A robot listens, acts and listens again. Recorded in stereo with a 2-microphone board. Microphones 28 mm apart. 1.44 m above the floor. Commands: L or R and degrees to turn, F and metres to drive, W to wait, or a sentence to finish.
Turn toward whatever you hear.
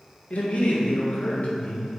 L55
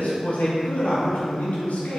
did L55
L75
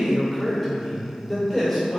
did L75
Facing the man speaking.